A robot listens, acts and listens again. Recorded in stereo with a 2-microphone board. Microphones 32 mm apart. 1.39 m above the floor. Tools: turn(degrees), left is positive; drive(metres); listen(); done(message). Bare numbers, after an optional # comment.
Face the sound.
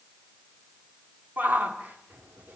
# The shout: about 65° right or 115° right.
turn(-65)
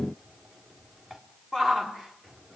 done("Facing the shout.")